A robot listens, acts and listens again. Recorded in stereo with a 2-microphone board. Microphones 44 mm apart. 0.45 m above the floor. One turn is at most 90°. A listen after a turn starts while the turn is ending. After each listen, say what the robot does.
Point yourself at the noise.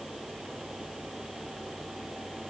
Keep listening.
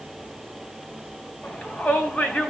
Turn 30° left.
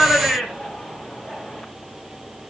Found it: a shout, straight ahead, 2 to 4 m away.